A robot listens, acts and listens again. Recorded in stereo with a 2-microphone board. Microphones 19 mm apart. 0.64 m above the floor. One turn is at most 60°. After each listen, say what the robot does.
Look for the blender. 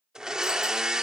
Turn 40° right.
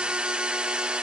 Turn 60° right.
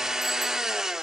Turn 35° right.
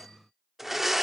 Turn 10° right.
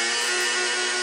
Found it: a blender, straight ahead, under 1 m away.